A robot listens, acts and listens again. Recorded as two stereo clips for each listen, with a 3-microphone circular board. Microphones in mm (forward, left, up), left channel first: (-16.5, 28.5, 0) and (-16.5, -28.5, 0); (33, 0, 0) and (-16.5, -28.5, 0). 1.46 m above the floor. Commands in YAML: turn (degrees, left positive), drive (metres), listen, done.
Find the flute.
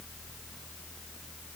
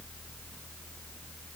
listen: true
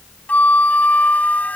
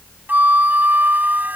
turn: 155
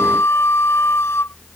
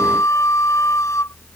turn: 55
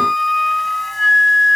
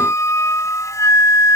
done: "Facing the flute."